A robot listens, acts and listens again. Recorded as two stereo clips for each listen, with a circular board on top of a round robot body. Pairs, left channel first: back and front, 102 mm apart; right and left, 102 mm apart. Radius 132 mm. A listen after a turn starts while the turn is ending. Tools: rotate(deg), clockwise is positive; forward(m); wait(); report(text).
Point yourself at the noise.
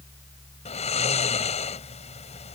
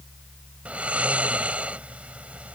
rotate(-170)
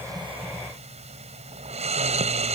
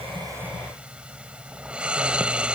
rotate(-10)
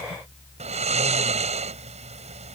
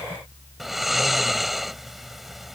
report("Facing the snoring.")